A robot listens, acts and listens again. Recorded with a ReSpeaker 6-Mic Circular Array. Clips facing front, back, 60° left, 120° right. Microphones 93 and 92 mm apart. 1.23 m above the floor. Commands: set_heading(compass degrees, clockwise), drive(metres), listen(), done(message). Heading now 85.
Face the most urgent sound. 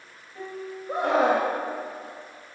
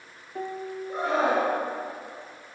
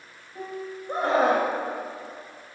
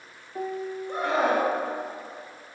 done("Found it: a scream, straight ahead.")